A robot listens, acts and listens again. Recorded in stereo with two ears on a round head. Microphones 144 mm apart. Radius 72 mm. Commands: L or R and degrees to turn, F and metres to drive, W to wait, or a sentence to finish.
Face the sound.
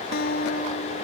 L70
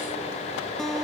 Found it: a guitar, straight ahead.